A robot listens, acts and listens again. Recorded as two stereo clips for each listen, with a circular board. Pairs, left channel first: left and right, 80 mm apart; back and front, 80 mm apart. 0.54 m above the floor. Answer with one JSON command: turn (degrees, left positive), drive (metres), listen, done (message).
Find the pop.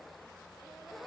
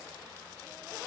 {"listen": true}
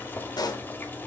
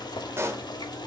{"turn": 55}
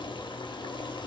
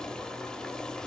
{"done": "I heard a pop from this way, but can't make it out now."}